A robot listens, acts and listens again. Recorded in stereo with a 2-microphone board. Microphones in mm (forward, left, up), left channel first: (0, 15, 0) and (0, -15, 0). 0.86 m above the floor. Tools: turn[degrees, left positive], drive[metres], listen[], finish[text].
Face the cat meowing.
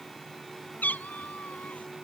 Thought: The cat meowing: about 70° left or 110° left.
Action: turn[70]
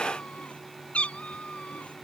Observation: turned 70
Thought: So it is at 45° left.
Action: turn[45]
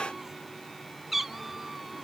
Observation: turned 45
Thought: The cat meowing is now 10° right.
Action: turn[-10]
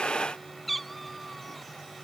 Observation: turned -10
Action: finish[Found it: a cat meowing, straight ahead.]